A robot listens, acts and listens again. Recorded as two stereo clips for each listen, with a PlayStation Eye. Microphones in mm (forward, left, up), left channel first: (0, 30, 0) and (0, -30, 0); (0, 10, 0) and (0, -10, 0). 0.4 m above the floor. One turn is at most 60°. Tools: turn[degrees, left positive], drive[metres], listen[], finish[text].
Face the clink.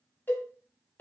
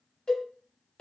Action: listen[]
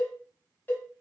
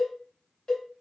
Action: listen[]
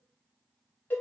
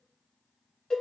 Action: finish[I can't make out a clink to turn to.]